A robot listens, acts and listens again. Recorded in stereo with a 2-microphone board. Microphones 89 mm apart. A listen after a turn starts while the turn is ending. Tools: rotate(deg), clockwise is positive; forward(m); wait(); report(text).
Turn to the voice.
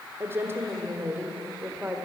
rotate(30)
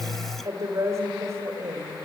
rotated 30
rotate(150)
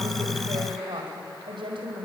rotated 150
rotate(70)
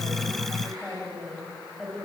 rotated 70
report("Found it: a woman speaking, straight ahead, over 4 m away.")